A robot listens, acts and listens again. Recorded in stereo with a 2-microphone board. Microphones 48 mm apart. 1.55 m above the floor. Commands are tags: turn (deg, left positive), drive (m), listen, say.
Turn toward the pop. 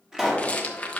<turn deg="-30"/>
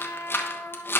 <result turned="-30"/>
<listen/>
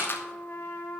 <say>I heard a pop, but can't make it out now. It was about 15° left or 135° right.</say>